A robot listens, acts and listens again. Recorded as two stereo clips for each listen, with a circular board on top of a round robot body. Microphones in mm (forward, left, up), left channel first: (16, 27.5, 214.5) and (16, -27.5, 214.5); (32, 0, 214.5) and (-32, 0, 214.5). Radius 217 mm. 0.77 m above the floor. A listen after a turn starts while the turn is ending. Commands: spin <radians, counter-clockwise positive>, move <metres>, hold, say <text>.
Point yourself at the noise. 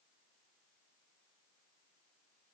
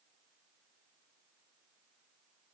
hold
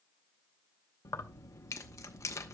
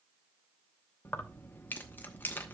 spin 1.05
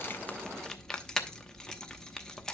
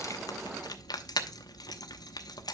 spin 0.17
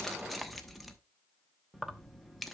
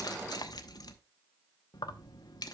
say Facing the keys jangling.